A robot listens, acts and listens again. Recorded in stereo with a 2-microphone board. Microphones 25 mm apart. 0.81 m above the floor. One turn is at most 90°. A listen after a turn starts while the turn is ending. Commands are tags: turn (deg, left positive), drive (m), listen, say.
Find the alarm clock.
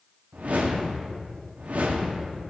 <listen/>
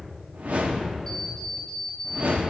<turn deg="30"/>
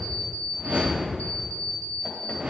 <turn deg="90"/>
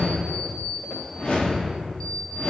<turn deg="20"/>
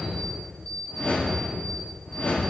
<say>Facing the alarm clock, 2 to 4 m away.</say>